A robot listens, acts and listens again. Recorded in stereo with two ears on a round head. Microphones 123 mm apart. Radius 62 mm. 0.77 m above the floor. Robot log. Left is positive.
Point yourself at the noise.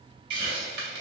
cmd yaw -90
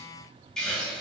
end: Facing the hiss.